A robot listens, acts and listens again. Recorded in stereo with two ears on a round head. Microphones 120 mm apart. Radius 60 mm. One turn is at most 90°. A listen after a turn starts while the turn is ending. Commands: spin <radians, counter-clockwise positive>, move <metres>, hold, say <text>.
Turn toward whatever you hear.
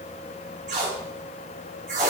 spin -1.13
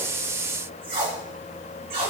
spin -0.79
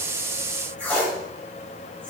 spin 0.26
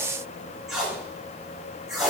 say Facing the tape being pulled, 2 to 4 m away.